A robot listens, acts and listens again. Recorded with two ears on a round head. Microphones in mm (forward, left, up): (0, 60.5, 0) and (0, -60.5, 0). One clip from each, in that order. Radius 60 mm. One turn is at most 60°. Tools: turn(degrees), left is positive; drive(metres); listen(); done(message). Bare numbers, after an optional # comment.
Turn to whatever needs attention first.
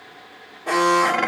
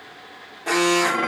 # The alarm: about 55° right or 125° right.
turn(-55)
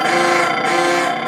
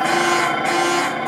done("Found it: an alarm, straight ahead, 1 to 2 m away.")